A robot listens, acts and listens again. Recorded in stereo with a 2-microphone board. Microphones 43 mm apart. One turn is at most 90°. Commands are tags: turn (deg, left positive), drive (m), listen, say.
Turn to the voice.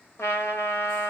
<listen/>
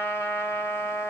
<listen/>
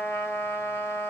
<say>I can't make out anyone speaking to turn to.</say>